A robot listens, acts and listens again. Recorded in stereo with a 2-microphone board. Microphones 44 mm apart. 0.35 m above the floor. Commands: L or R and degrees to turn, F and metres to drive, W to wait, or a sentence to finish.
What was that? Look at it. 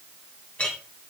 L30
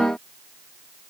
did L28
W
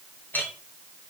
L120
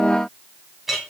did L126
R10
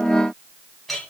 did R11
Found it: a clink, straight ahead, 2 to 4 m away.